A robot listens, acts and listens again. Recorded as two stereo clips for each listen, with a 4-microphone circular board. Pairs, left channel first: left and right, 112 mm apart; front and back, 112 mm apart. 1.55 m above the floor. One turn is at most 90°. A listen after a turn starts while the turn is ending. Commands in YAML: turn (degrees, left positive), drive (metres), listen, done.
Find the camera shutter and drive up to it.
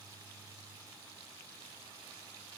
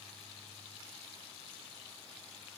listen: true
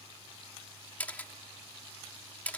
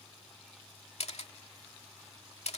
turn: 15
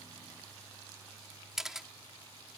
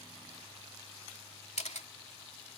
drive: 1.0
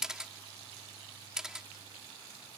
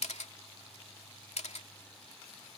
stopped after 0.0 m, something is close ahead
done: "Blocked. The camera shutter is further on, straight ahead."